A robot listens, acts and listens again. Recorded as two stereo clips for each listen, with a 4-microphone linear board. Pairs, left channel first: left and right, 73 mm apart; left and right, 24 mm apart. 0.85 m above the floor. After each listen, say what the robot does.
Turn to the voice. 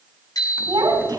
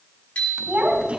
Turn 90° right.
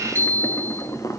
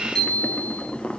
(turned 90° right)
Keep listening.
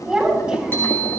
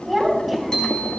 Turn 10° right.
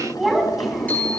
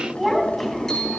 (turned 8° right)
Found it: a child speaking, straight ahead.